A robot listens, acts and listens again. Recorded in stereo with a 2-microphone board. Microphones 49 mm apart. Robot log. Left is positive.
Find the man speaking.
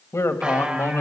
note: The man speaking: about 65° left or 115° left.
cmd yaw +65
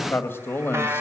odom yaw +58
note: So it is at 50° left.
cmd yaw +50
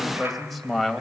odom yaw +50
end: Facing the man speaking.